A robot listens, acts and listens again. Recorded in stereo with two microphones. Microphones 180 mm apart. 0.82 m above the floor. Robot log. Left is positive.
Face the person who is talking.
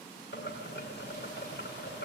cmd idle
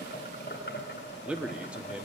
cmd yaw -30
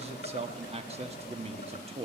note: So it is at 145° right.
cmd yaw -145
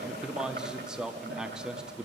end: Facing the man speaking.